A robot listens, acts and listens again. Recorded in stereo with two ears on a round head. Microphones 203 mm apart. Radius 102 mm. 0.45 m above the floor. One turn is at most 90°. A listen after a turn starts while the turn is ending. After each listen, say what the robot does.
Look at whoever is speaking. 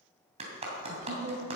Turn 45° right.
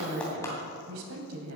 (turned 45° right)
Turn 85° right.
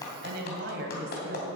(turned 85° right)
Turn 50° right.
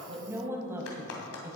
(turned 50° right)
Turn 10° right.
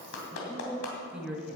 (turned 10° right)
Facing the woman speaking.